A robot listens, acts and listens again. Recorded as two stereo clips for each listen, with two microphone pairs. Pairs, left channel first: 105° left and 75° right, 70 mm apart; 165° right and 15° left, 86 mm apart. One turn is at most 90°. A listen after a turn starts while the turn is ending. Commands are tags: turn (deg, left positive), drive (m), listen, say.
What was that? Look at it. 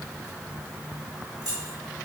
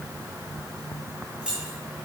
<turn deg="-60"/>
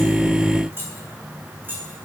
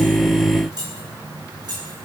<turn deg="-15"/>
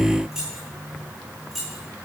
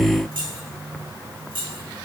<turn deg="15"/>
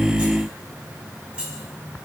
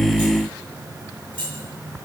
<say>Found it: keys jangling, straight ahead.</say>